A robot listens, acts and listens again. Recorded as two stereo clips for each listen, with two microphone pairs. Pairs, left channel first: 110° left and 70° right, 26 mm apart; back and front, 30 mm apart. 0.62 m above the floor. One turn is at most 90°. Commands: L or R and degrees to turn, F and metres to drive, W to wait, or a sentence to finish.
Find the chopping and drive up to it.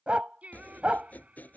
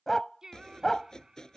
L90
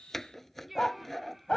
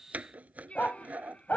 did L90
L30
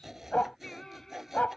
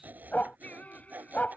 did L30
L10
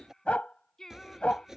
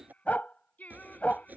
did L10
F1.0
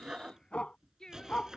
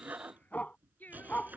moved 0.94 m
F1.0
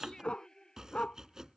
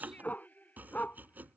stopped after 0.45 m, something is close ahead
Something is in my way. I am facing the chopping but have not reached it.